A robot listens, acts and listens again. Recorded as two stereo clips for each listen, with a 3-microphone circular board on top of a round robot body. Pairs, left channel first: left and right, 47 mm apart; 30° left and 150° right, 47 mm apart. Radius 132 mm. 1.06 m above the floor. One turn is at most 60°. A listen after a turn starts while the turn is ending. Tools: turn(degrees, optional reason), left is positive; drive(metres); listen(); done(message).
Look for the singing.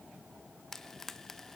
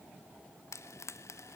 listen()
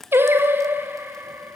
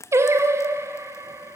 turn(degrees=-60, reason="The singing: 130° right.")
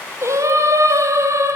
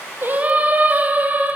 turn(degrees=-60, reason="The singing is now 95° right.")
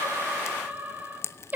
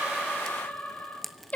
turn(degrees=-35, reason="The singing is now 35° right.")
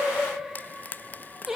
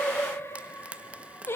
turn(degrees=-10, reason="The singing is now 10° right.")
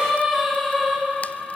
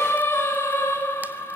done("Facing the singing.")